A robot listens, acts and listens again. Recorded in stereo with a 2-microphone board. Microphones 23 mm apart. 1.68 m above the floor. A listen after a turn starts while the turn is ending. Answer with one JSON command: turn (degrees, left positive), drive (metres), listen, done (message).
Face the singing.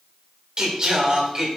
{"turn": -40}
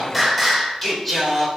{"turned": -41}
{"turn": 10}
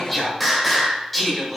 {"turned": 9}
{"done": "Facing the singing."}